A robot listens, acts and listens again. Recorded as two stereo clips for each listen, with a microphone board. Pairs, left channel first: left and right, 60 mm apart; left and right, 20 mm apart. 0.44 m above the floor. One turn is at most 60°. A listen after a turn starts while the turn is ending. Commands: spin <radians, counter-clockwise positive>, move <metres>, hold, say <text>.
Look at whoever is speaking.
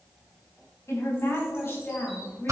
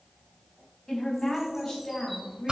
spin 0.52
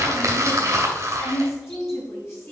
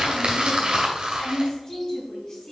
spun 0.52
spin 0.70
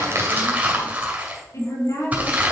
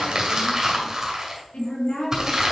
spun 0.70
spin 1.05
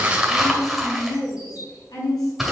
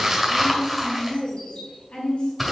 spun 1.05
spin 1.05
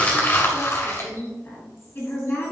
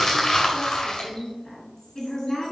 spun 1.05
spin 0.52
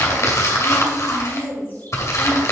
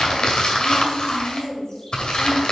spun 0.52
spin 0.35
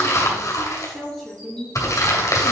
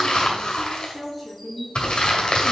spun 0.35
say Found it: a woman speaking, straight ahead.